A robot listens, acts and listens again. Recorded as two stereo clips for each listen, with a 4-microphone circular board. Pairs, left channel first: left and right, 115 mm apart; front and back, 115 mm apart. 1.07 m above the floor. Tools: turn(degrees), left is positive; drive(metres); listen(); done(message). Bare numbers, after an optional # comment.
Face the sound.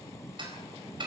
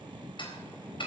# The ticking: 45° right.
turn(-45)
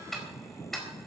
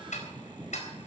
done("Facing the ticking, over 4 m away.")